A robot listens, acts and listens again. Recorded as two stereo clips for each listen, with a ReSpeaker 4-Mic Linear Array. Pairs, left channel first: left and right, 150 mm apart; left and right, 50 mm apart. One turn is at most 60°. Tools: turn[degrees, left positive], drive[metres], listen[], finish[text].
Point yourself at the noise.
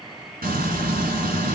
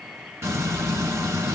Thought: The frying: about 75° right or 105° right.
Action: turn[-60]
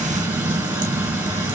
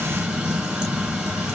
Thought: So it is at 10° right.
Action: turn[-10]
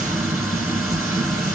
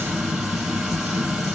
Action: finish[Found it: frying, straight ahead.]